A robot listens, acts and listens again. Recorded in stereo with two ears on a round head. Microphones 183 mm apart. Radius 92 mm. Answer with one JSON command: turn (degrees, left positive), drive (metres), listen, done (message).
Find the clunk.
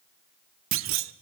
{"turn": -70}
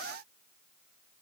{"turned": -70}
{"listen": true}
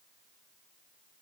{"done": "I heard a clunk, but can't make it out now. It was about straight ahead or 40° right."}